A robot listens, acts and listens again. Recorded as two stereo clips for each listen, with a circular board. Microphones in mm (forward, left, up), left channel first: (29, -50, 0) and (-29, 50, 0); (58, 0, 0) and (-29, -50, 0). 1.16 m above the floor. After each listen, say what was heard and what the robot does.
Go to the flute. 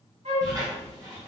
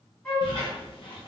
The flute: 105° left. Turn 105° left.
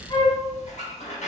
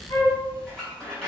The flute is now 15° right. Turn 15° right.
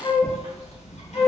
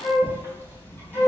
Drive 1.0 m forward.
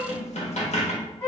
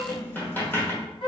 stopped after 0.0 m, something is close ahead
Something is in my way. I am facing the flute but have not reached it.